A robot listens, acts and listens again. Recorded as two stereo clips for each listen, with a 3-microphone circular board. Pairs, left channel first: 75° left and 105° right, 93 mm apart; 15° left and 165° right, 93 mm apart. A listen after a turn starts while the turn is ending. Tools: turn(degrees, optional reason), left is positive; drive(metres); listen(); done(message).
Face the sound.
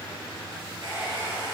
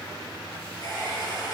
turn(degrees=60, reason="The hair dryer: 60° left.")
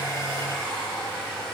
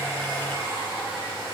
done("Facing the hair dryer, over 4 m away.")